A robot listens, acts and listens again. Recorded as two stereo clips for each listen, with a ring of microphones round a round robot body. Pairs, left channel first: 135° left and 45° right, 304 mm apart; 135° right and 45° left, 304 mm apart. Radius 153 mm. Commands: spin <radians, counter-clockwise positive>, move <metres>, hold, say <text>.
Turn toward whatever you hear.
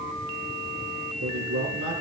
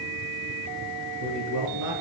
say Found it: a man speaking, straight ahead.